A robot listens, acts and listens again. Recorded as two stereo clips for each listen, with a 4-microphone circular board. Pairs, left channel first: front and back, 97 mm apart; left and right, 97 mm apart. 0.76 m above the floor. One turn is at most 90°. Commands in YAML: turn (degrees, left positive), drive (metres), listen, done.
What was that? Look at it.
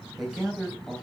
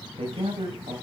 turn: -90
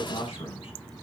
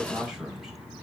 done: "Facing the man speaking, 2 to 4 m away."